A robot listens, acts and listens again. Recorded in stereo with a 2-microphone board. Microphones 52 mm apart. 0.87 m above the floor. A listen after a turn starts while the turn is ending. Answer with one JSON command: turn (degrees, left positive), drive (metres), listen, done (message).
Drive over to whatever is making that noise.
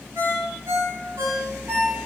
{"turn": -70}
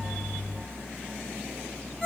{"drive": 1.0}
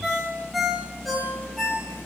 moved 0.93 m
{"drive": 1.0}
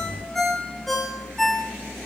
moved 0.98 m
{"drive": 1.0}
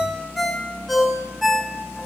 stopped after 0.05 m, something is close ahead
{"done": "Arrived at the ringtone, straight ahead."}